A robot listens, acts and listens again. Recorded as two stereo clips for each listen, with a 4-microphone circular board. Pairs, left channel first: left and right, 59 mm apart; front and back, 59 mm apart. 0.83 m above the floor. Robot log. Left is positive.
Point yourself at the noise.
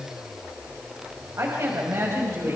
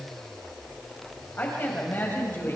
note: The woman speaking: 45° right.
cmd yaw -45
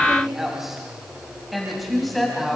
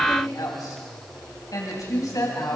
end: Facing the woman speaking, over 4 m away.